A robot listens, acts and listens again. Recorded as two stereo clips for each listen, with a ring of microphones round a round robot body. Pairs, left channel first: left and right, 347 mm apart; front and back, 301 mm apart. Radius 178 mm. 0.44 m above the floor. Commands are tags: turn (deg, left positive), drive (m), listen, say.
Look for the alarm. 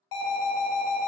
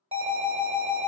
<turn deg="110"/>
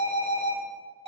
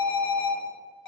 <turn deg="-20"/>
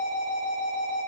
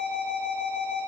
<say>Facing the alarm.</say>